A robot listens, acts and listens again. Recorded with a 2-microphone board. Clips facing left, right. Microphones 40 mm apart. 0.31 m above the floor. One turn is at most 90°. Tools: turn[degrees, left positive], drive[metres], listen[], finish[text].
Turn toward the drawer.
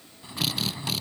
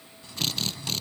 Thought: The drawer: about 25° left or 155° left.
Action: turn[25]
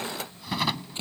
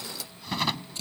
Action: finish[Facing the drawer.]